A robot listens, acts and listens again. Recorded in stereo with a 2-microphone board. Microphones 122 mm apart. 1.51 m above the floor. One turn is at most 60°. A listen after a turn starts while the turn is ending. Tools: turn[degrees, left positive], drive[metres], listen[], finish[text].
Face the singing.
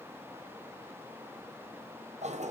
Action: listen[]
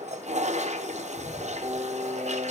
Thought: The singing: about 55° right or 125° right.
Action: turn[-55]
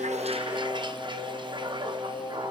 Action: finish[Facing the singing.]